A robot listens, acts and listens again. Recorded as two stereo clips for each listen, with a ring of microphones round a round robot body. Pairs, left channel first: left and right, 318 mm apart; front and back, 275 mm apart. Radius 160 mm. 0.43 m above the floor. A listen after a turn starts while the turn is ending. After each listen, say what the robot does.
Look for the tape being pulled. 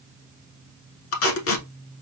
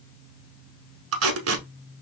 Turn 140° left.
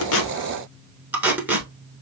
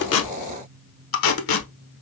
Found it: tape being pulled, straight ahead, under 1 m away.